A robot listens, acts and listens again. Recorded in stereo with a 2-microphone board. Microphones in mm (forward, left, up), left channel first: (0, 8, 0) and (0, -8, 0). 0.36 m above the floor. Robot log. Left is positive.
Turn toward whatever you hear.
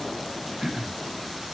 note: The throat clearing: about 40° right or 140° right.
cmd yaw -40
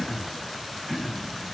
end: Found it: throat clearing, straight ahead, 1 to 2 m away.